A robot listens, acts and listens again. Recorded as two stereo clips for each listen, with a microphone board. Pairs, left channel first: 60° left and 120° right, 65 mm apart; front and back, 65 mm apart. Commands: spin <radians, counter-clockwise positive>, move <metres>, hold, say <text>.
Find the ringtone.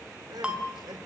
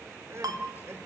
spin 2.88
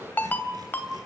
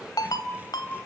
say Found it: a ringtone, straight ahead, 2 to 4 m away.